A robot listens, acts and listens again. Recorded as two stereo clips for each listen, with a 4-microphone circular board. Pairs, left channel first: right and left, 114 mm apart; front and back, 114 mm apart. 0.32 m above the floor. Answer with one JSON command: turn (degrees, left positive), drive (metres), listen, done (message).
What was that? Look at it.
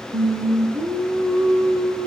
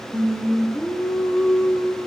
{"turn": 70}
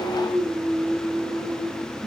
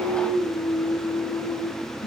{"done": "Facing the singing."}